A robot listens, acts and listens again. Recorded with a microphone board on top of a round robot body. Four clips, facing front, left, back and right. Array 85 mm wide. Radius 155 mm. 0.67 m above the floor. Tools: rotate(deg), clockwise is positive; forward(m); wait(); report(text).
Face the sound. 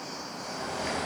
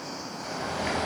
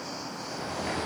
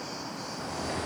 rotate(-75)
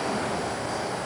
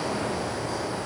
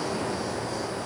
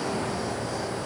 report("Facing the bird, over 4 m away.")